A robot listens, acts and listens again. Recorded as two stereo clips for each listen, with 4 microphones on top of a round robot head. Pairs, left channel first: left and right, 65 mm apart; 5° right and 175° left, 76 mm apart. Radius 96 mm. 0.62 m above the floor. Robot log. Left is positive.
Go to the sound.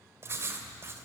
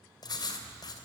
note: The writing: 35° right.
cmd yaw -35
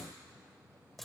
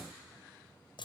cmd fwd 1.0
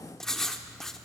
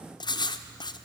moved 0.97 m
cmd fwd 1.0
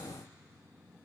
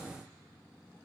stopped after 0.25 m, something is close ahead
cmd idle
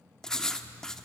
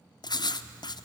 note: The writing is now 10° left.
cmd yaw +10
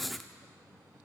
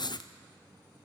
end: Arrived at the writing, straight ahead.